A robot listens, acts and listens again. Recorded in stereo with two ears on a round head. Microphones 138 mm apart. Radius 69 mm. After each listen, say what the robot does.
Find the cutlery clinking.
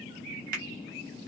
Keep listening.
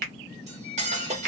Turn 45° right.
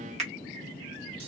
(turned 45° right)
Keep listening.
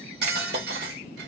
Turn 90° right.
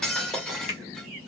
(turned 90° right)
Found it: cutlery clinking, straight ahead.